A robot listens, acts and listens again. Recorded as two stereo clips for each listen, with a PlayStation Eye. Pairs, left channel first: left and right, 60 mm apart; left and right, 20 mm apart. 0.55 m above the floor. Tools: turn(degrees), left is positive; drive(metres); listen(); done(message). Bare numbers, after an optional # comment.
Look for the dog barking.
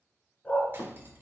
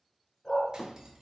# The dog barking: about 20° left or 160° left.
turn(20)
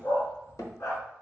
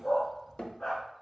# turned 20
# So it is at 125° left.
turn(125)
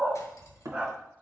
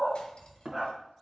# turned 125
# The dog barking is now 25° right.
turn(-25)
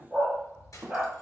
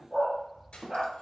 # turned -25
# The dog barking is now 15° right.
turn(-15)
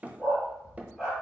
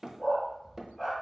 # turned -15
done("Facing the dog barking, 2 to 4 m away.")